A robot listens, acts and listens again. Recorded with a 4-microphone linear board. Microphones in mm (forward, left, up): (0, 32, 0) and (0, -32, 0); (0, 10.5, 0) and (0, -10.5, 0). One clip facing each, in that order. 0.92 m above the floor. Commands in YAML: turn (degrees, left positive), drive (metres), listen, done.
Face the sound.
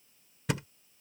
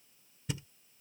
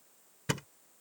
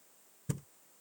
turn: 90
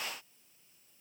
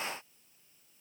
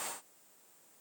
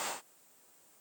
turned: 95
done: "Facing where the thud came from. I can't hear it now."